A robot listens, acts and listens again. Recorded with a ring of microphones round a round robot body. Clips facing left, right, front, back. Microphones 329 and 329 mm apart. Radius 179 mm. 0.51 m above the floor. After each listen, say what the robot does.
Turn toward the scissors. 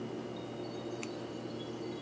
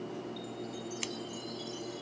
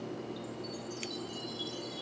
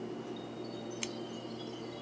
Turn 115° right.
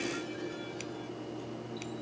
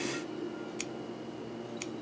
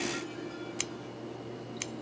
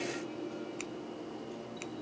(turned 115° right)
Turn 25° right.
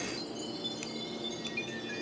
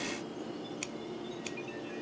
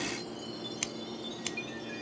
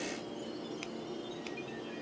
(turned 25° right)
Turn 15° right.
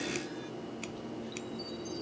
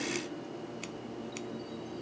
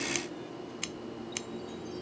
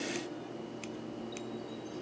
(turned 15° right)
Found it: scissors, straight ahead.